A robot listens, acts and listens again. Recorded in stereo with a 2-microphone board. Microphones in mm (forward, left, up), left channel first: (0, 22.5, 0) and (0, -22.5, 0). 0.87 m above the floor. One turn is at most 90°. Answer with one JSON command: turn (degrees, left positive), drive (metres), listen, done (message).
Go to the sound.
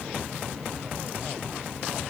{"listen": true}
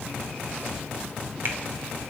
{"listen": true}
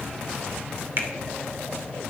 {"turn": -55}
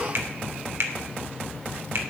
{"turn": -70}
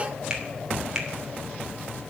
{"turn": -15}
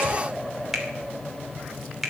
{"drive": 1.0}
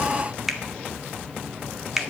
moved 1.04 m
{"drive": 1.0}
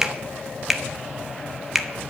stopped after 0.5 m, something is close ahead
{"done": "I am next to the finger snap."}